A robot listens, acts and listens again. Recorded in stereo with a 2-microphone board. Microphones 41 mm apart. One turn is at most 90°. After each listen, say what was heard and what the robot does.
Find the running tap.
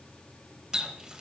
The running tap: about 15° right or 165° right. Turn 15° right.
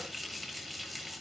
Facing the running tap, 1 to 2 m away.